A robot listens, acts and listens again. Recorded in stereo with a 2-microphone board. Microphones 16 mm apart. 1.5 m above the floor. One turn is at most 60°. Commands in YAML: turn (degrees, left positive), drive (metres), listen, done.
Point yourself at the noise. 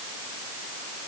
listen: true
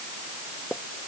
turn: 60
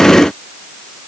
listen: true
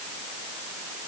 done: "I heard a pop, but can't make it out now. It was about straight ahead or 60° left."